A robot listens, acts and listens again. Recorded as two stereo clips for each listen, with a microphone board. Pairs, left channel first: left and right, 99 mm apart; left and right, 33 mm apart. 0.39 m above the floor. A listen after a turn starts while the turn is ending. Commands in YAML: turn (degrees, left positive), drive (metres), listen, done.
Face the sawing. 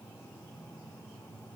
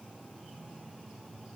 listen: true
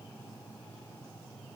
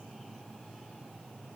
listen: true
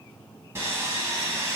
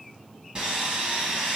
turn: -25
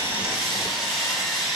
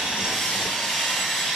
done: "Facing the sawing, 1 to 2 m away."